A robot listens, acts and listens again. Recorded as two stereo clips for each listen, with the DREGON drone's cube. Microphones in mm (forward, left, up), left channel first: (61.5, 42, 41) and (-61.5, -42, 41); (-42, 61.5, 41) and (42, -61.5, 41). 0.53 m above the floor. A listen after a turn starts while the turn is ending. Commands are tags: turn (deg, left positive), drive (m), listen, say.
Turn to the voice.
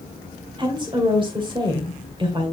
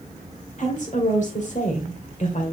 <turn deg="160"/>
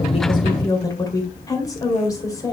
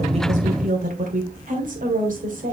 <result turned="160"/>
<turn deg="-30"/>
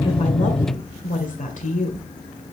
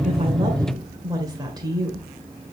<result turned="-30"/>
<turn deg="10"/>
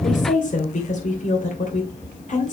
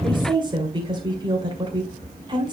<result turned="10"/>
<say>Found it: a woman speaking, straight ahead.</say>